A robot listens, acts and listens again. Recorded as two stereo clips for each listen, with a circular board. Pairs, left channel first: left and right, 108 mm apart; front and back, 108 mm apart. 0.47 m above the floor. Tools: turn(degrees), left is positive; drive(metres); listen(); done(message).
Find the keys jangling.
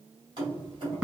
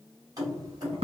turn(degrees=-130)
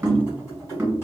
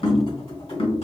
turn(degrees=25)
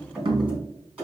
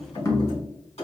turn(degrees=-10)
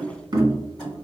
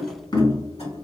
done("Found it: keys jangling, straight ahead.")